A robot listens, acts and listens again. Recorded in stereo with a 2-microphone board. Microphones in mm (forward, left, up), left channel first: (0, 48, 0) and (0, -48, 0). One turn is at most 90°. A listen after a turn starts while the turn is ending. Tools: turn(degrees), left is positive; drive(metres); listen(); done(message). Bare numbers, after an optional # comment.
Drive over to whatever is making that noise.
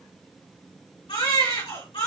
turn(90)
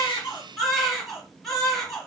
drive(1.0)
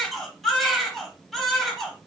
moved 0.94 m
drive(1.0)
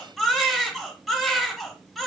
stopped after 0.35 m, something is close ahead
done("I am next to the baby crying.")